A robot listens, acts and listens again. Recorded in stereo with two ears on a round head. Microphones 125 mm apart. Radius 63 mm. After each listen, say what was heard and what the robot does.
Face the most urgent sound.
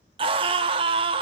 The scream: about 40° right or 140° right. Turn 40° right.
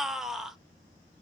Facing the scream, 1 to 2 m away.